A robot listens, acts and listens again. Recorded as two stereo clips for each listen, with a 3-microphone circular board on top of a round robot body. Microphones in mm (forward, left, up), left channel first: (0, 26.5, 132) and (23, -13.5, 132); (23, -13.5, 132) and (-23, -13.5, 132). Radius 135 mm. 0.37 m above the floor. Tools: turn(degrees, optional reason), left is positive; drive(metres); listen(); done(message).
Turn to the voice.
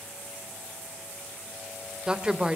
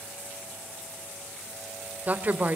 turn(degrees=-130, reason="The woman speaking: 130° right.")
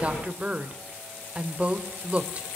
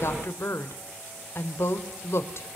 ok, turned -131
done("Facing the woman speaking.")